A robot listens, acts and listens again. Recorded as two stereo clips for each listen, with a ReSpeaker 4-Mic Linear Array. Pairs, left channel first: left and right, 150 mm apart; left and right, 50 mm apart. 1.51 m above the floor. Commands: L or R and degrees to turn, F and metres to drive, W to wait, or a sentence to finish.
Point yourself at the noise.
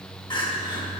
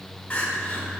L30
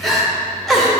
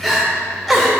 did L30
Found it: crying, straight ahead, 1 to 2 m away.